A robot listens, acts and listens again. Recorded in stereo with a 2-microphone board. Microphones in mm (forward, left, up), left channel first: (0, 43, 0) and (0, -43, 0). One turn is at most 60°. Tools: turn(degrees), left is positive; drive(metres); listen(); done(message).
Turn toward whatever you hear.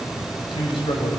turn(degrees=60)
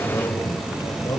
turn(degrees=40)
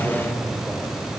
listen()
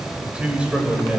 turn(degrees=-10)
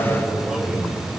done("Found it: a man speaking, straight ahead.")